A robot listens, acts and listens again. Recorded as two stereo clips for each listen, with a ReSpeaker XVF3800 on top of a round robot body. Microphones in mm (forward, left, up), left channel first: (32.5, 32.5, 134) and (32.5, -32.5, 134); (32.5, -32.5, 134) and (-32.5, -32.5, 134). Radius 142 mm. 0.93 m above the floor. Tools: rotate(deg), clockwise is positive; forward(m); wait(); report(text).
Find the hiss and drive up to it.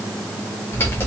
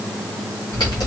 wait()
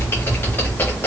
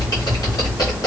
wait()
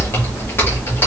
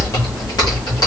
report("I can't make out a hiss to turn to.")